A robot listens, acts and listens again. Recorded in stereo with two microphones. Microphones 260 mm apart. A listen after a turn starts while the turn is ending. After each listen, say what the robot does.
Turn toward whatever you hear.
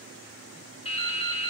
Turn 20° left.
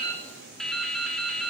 Facing the dripping, 1 to 2 m away.